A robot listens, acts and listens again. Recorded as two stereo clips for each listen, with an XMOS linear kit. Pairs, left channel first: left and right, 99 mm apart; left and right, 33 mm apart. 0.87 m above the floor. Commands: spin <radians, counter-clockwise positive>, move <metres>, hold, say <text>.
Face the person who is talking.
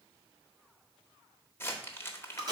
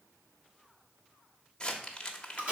hold
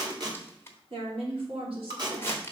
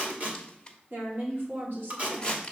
spin -1.22
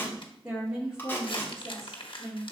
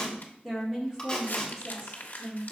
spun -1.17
say Facing the woman speaking, 2 to 4 m away.